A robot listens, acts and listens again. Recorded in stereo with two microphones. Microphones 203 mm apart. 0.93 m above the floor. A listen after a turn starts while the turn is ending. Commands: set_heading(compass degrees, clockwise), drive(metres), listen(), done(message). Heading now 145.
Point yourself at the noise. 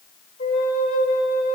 set_heading(55)
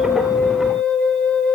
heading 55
done("Found it: a flute, straight ahead, 2 to 4 m away.")